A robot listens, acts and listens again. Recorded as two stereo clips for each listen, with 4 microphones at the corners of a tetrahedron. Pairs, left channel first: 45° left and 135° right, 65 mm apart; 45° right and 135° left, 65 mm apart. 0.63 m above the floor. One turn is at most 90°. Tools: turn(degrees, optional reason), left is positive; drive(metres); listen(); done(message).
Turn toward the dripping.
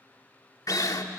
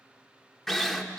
listen()
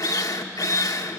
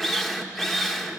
listen()
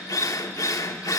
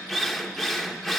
done("I can't make out dripping, only a drill.")